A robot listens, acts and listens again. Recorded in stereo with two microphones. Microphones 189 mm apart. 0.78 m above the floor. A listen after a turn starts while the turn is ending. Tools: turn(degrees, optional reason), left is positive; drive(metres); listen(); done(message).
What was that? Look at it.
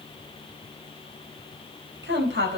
turn(degrees=-90)
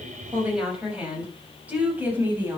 turn(degrees=-10, reason="So it is at 10° right.")
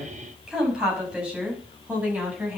turn(degrees=-10, reason="The woman speaking is now 10° right.")
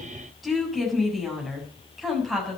done("Found it: a woman speaking, straight ahead, over 4 m away.")